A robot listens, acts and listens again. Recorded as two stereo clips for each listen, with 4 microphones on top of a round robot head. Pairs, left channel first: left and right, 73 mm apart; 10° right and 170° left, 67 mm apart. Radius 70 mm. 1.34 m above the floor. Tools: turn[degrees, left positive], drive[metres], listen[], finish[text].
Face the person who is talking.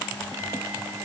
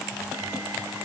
Action: listen[]
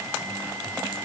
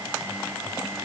Action: listen[]
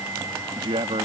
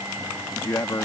Thought: The man speaking: 75° right.
Action: turn[-75]
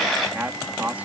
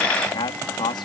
Thought: The man speaking is now 15° right.
Action: turn[-15]
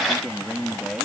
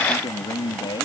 Action: finish[Found it: a man speaking, straight ahead.]